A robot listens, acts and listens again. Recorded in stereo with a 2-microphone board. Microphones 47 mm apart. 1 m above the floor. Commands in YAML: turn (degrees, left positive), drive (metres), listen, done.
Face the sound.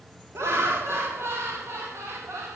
turn: -70
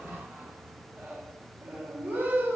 turn: -40
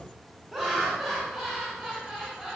turn: -10
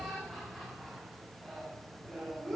done: "Found it: laughter, straight ahead, over 4 m away."